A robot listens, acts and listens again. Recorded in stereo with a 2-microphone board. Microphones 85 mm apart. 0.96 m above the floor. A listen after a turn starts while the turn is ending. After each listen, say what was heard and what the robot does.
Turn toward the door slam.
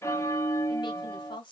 Keep listening.
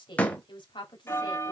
The door slam: about 15° left or 165° left. Turn 15° left.
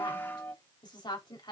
Keep listening.
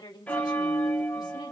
I heard a door slam, but can't make it out now. It was about straight ahead or 150° left.